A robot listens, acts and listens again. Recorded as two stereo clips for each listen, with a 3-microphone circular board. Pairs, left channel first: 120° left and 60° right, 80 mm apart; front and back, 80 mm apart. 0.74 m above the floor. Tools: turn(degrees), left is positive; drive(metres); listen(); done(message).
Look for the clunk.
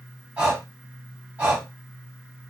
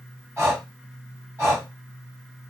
listen()
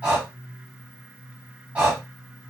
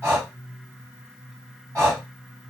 listen()
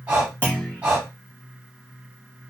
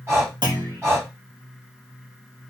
turn(degrees=-175)
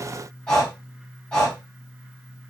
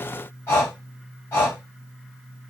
done("I heard a clunk from this way, but can't make it out now.")